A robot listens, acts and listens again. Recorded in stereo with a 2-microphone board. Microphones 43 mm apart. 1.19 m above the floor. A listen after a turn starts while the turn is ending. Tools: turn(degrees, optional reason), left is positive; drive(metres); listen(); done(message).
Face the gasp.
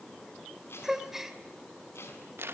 turn(degrees=-30)
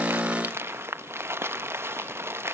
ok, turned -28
listen()
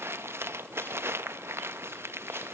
done("I heard a gasp, but can't make it out now. It was about 20° left or 145° right.")